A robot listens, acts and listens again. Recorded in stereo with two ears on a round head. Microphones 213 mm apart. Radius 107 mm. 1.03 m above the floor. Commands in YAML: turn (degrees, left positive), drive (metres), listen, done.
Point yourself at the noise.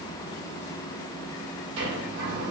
turn: -55
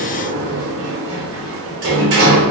turn: -65
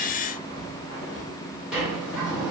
done: "Found it: a sliding door, straight ahead."